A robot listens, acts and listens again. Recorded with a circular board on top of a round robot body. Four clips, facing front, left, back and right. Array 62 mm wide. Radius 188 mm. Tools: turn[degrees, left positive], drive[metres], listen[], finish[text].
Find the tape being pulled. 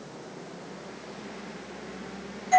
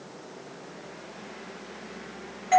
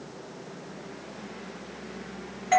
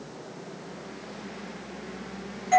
Action: listen[]
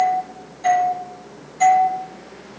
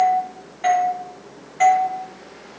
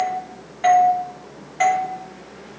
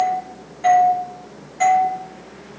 Action: listen[]
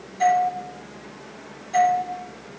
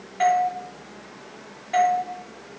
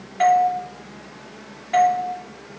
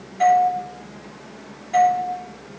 Action: finish[I can't make out tape being pulled to turn to.]